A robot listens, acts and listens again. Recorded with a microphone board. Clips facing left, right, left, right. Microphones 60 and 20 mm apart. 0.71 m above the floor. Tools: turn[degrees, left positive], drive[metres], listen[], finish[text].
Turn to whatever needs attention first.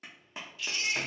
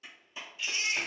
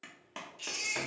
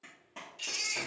Thought: The baby crying: about 25° right or 155° right.
Action: turn[-25]
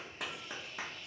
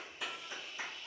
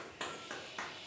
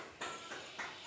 Action: listen[]
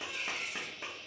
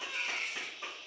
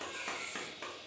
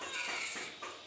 Thought: So it is at 130° right.
Action: turn[-130]
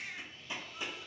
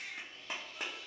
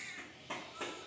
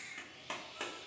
Thought: The baby crying is now 30° left.
Action: turn[30]
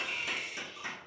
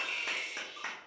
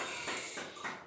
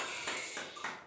Action: finish[Facing the baby crying.]